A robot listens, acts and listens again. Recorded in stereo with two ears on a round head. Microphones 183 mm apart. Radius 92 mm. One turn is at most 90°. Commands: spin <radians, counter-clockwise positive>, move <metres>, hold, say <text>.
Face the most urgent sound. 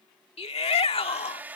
spin 0.52
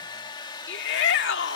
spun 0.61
spin 1.57
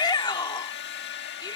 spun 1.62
spin 0.35
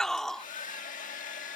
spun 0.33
say Found it: a shout, straight ahead.